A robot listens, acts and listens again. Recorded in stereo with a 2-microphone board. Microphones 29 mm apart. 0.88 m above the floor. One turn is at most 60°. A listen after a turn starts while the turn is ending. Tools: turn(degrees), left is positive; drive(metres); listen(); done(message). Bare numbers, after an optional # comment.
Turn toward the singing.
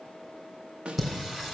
# The singing: about 15° right or 165° right.
turn(-15)
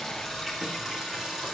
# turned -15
turn(-30)
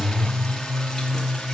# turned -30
done("Found it: singing, straight ahead, 2 to 4 m away.")